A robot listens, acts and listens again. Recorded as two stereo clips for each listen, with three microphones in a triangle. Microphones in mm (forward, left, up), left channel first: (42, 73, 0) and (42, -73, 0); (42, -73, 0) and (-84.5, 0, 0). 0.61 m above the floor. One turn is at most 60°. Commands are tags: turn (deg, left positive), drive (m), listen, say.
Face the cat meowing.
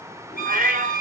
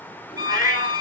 <turn deg="-55"/>
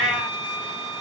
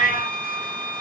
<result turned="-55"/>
<say>Found it: a cat meowing, straight ahead, 2 to 4 m away.</say>